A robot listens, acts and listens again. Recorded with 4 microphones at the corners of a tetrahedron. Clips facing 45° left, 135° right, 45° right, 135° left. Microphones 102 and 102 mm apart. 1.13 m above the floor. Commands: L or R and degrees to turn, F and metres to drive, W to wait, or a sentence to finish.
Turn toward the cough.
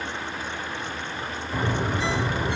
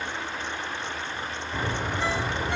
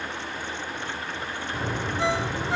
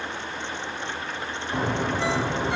W
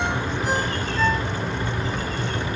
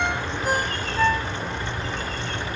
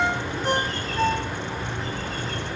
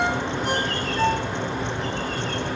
W
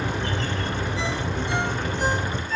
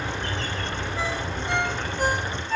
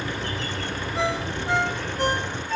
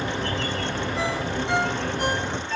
I can't make out a cough to turn to.